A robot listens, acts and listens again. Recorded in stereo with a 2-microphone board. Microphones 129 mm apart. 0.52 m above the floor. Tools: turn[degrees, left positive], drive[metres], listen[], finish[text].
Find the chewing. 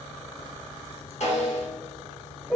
Action: listen[]
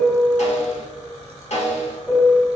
Action: listen[]
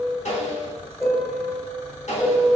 Action: finish[I can't make out chewing, only a piano and a snare drum.]